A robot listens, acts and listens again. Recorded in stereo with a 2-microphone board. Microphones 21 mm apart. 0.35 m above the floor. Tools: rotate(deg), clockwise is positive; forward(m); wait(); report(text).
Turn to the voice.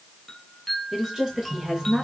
rotate(30)
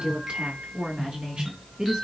rotate(130)
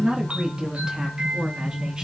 rotate(20)
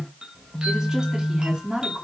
rotate(15)
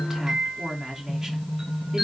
report("Facing the woman speaking, 2 to 4 m away.")